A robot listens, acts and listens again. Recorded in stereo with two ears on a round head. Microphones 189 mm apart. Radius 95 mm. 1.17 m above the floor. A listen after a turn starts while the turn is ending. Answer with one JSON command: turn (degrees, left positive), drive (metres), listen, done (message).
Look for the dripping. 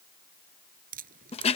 {"turn": -45}
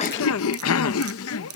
{"turn": -90}
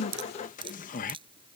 {"turn": -25}
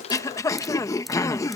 {"listen": true}
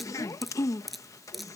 {"done": "Found it: dripping, straight ahead."}